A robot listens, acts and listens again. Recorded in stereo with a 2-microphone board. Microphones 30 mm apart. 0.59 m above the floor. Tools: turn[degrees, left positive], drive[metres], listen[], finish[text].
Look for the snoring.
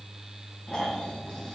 Thought: The snoring: about 30° left or 150° left.
Action: turn[30]
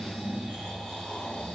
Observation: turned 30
Thought: So it is at 120° left.
Action: turn[120]
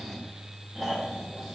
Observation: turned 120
Action: finish[Found it: snoring, straight ahead, 1 to 2 m away.]